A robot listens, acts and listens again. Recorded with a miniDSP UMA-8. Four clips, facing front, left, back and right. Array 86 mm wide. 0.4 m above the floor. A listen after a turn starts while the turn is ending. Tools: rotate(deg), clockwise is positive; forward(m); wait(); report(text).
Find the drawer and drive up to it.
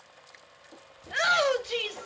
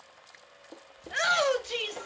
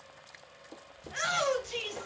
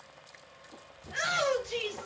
rotate(-105)
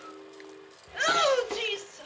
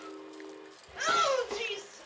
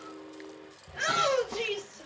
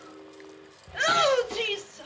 wait()
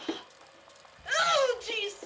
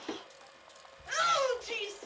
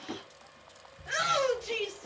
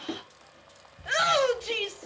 forward(1.0)
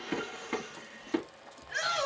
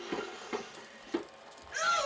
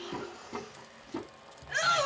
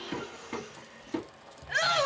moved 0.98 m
forward(1.0)
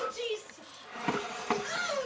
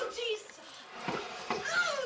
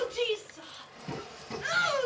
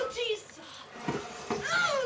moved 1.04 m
rotate(-10)
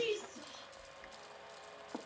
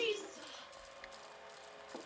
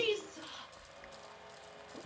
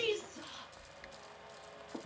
forward(1.0)
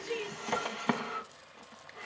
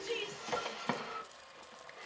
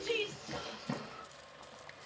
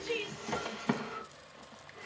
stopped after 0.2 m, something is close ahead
report("Arrived at the drawer, straight ahead.")